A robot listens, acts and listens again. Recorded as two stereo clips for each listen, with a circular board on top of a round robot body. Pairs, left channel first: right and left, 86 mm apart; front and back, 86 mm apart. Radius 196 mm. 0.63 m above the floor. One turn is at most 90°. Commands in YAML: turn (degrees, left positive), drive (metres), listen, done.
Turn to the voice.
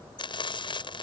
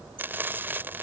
listen: true
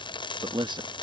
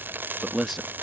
turn: 90
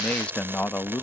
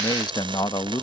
turn: -25
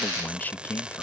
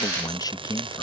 turn: -25
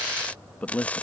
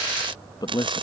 turn: -20
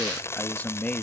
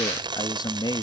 turn: -20
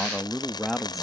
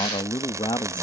done: "Facing the man speaking."